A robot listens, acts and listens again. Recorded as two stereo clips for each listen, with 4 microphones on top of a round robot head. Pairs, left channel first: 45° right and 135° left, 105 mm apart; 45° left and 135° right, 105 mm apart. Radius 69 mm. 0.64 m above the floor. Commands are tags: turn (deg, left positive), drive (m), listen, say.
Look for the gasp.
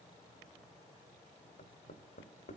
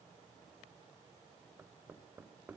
<listen/>
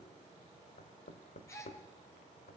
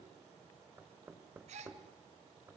<turn deg="-110"/>
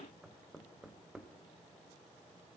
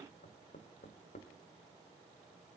<say>Facing where the gasp came from. I can't hear it now.</say>